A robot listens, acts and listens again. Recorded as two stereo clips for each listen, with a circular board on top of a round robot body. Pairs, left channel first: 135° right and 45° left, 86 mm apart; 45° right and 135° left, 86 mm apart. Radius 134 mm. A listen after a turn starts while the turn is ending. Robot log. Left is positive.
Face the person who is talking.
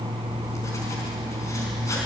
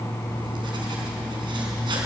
cmd idle
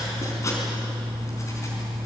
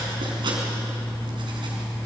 cmd idle
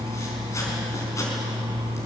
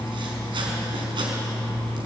end: I can't make out anyone speaking to turn to.